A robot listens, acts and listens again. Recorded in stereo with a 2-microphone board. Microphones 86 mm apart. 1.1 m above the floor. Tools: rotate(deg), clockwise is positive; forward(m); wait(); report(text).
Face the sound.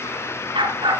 rotate(70)
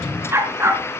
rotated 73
rotate(30)
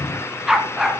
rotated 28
report("Found it: a dog barking, straight ahead.")